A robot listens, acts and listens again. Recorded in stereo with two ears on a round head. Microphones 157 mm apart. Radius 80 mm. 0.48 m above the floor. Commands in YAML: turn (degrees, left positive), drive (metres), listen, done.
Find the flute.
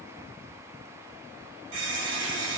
listen: true
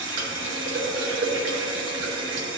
listen: true
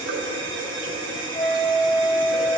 turn: 30
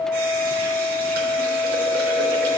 turn: 150
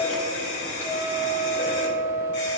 turn: 10
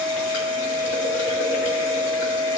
done: "Facing the flute."